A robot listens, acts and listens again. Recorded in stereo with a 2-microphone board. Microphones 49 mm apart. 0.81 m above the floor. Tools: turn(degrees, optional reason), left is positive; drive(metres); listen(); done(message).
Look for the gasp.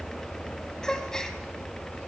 turn(degrees=30)
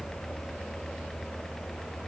listen()
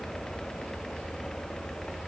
done("I heard a gasp, but can't make it out now. It was about 20° right or 140° left.")